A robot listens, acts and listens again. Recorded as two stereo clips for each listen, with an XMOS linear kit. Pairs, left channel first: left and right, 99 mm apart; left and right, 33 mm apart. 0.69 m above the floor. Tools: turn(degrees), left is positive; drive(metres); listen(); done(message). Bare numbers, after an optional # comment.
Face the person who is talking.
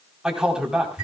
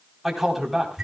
turn(-30)
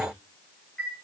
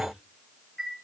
listen()
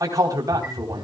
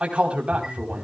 # So it is at 140° right.
turn(-140)
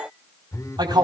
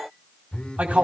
# The man speaking is now 50° right.
turn(-50)
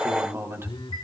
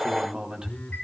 # The man speaking is now 25° right.
turn(-25)
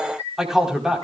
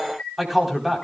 done("Found it: a man speaking, straight ahead, 2 to 4 m away.")